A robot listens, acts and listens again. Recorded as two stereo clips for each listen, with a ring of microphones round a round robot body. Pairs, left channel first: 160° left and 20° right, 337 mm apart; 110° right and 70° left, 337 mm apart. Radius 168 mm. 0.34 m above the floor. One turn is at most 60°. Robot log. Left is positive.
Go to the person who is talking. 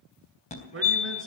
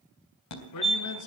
note: The man speaking: 75° right.
cmd yaw -60
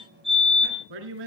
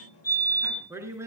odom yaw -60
note: The man speaking is now 15° right.
cmd yaw -15
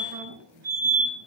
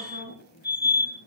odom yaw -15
cmd idle
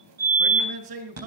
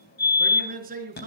cmd fwd 1.0
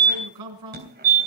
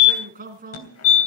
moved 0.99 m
cmd fwd 1.0
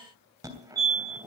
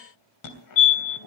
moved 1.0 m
cmd idle
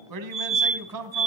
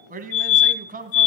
cmd fwd 1.0
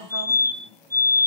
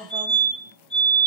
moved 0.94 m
cmd fwd 1.0
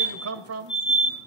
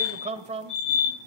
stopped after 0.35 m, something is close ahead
end: Arrived at the man speaking, straight ahead.